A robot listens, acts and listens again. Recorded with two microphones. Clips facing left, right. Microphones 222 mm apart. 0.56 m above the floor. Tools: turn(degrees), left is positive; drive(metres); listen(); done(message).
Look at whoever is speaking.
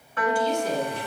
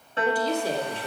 turn(degrees=-30)
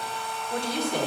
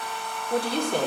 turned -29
turn(degrees=-25)
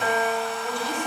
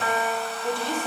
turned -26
turn(degrees=-20)
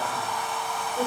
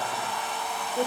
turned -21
turn(degrees=-25)
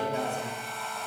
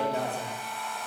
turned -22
turn(degrees=-35)
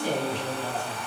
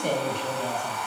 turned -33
turn(degrees=-120)
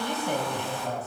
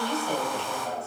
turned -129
turn(degrees=20)
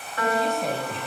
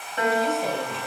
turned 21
done("Found it: a woman speaking, straight ahead, 2 to 4 m away.")